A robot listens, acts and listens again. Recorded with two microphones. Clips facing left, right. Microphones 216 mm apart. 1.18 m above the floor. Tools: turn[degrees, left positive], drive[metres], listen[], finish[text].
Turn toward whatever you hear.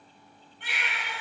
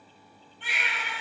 Thought: The baby crying: about 65° left or 115° left.
Action: turn[65]
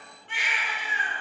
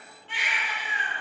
Thought: So it is at 50° left.
Action: turn[50]
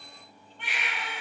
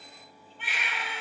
Action: finish[Found it: a baby crying, straight ahead.]